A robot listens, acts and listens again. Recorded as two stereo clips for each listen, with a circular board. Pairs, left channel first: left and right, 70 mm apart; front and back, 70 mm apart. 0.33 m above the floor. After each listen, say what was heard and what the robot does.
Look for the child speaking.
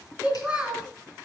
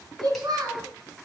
The child speaking: 170° right. Turn 170° right.
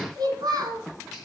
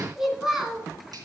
The child speaking is now 100° right. Turn 100° right.
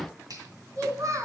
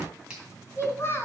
The child speaking is now 55° right. Turn 55° right.
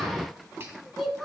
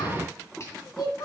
Facing the child speaking.